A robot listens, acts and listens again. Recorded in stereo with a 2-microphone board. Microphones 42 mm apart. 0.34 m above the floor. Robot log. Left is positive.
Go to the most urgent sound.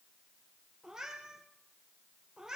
cmd idle
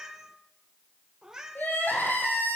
note: The crying: about 45° left or 135° left.
cmd yaw +45
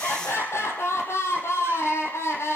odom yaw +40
note: So it is at 95° left.
cmd yaw +95
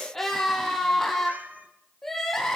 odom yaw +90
cmd fwd 1.0
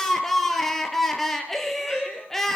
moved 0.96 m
cmd fwd 1.0
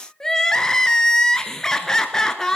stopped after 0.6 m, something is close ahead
note: The crying is now 15° left.
cmd yaw +15
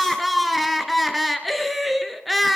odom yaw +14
end: I am next to the crying.